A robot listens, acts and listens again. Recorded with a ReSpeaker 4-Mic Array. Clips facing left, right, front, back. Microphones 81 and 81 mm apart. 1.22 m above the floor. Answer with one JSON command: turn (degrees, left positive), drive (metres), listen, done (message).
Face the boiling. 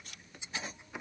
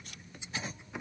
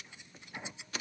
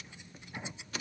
{"listen": true}
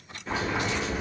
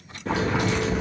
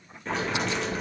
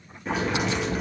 {"turn": -95}
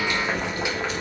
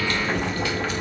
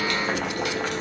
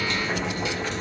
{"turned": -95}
{"turn": 20}
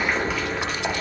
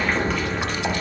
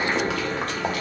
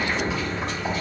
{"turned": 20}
{"done": "Facing the boiling, under 1 m away."}